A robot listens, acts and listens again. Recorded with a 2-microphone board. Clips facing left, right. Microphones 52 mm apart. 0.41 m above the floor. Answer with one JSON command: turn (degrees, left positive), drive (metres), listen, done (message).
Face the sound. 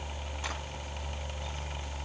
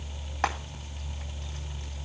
{"listen": true}
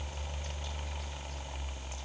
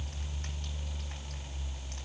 {"listen": true}
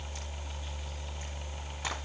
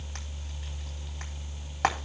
{"turn": -65}
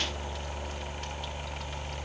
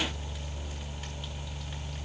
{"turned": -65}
{"listen": true}
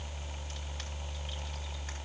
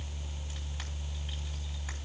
{"listen": true}
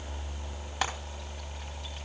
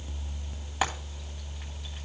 {"turn": -10}
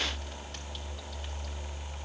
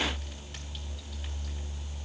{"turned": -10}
{"listen": true}
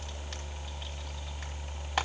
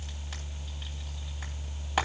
{"done": "Facing the frying."}